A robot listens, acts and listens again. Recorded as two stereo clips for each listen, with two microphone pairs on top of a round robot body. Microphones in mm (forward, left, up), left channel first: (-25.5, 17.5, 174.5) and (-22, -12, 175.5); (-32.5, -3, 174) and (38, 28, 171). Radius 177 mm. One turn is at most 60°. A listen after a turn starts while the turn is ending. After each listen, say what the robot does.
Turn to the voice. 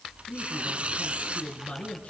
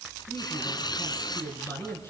Turn 60° left.
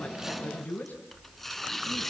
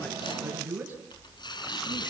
Turn 60° left.
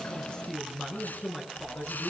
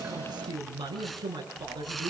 Turn 30° left.
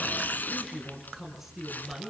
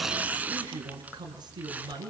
Turn 10° left.
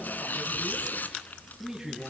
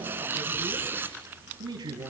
Found it: a man speaking, straight ahead, over 4 m away.